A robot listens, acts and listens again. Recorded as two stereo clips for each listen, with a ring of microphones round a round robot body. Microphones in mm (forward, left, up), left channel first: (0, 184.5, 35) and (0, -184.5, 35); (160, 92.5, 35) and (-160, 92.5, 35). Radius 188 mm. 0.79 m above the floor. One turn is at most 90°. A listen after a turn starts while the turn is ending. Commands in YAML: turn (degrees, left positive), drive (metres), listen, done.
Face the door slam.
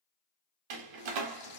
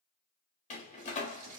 turn: -70
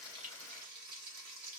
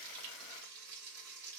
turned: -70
done: "I heard a door slam from this way, but can't make it out now."